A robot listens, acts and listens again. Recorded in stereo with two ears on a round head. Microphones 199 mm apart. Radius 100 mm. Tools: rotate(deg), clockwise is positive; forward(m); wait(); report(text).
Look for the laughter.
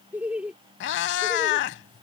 rotate(30)
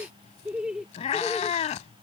rotate(-30)
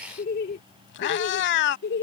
rotate(-130)
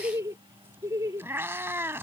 rotate(15)
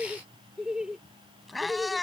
report("Found it: laughter, straight ahead.")